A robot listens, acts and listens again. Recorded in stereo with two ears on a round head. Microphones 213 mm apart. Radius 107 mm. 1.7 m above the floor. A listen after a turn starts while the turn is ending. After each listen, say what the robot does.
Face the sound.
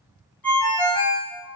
Turn 30° left.
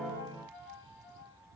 Keep listening.
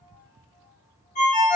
Turn 140° left.
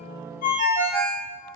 Turn 35° left.
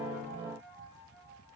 Keep listening.
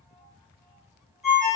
Facing the ringtone.